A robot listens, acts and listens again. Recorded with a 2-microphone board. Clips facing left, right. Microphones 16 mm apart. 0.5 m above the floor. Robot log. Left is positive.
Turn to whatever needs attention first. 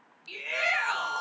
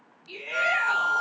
note: The shout: about 45° left or 135° left.
cmd yaw +45
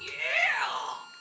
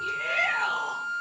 note: So it is at 80° left.
cmd yaw +80
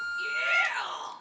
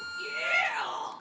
note: The shout is now 10° left.
cmd yaw +10
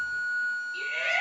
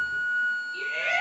end: Found it: a shout, straight ahead.